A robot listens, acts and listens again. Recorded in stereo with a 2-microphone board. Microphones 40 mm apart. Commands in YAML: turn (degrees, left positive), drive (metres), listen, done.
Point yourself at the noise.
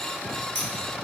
turn: 55
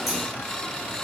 listen: true
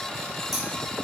done: "Facing the scissors."